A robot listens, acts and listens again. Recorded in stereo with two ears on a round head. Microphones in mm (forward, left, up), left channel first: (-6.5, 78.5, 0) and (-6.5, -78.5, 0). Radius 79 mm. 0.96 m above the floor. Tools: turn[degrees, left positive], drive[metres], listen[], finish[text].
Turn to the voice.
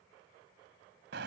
Action: listen[]
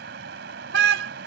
Action: listen[]
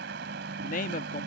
Thought: The man speaking: about 45° left or 135° left.
Action: turn[45]
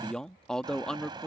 Action: finish[Facing the man speaking.]